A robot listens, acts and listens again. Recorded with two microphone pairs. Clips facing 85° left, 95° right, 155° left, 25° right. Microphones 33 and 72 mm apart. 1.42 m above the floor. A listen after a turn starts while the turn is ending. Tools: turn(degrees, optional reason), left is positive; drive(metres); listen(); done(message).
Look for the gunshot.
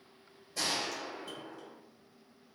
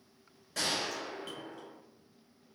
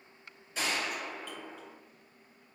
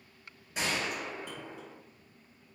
turn(degrees=-90, reason="The gunshot: 90° right.")
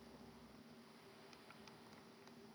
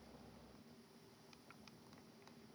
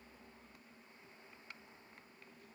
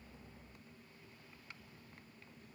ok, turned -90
done("Facing where the gunshot came from. I can't hear it now.")